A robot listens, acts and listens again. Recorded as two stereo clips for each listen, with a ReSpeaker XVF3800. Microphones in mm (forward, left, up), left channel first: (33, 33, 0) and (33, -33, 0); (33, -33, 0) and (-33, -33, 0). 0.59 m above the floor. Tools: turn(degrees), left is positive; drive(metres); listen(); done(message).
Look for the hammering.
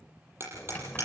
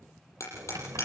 turn(degrees=-40)
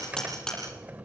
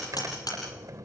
turn(degrees=10)
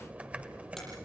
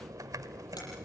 listen()
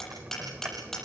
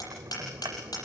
done("Facing the hammering, over 4 m away.")